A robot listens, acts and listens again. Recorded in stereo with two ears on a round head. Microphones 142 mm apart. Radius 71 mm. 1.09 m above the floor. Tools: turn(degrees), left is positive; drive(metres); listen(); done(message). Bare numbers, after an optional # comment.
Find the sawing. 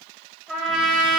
listen()
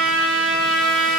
listen()
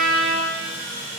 # The sawing: about 25° left or 155° left.
turn(25)
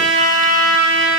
listen()
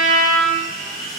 done("Found it: sawing, straight ahead, 1 to 2 m away.")